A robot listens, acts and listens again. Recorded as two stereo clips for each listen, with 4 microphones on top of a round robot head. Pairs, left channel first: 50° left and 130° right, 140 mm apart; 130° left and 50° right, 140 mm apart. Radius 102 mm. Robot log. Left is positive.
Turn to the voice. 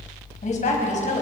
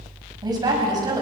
note: The woman speaking: 15° left.
cmd yaw +15
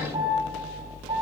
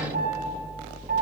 cmd idle
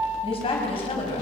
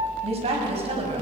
end: Facing the woman speaking.